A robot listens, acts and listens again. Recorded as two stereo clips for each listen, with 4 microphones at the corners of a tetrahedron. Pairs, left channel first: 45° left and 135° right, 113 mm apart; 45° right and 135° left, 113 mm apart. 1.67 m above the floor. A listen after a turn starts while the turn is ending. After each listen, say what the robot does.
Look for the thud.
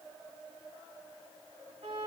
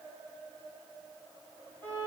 Keep listening.
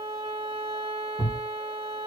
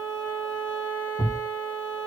Turn 25° right.
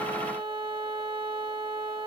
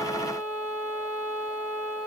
I heard a thud from this way, but can't make it out now.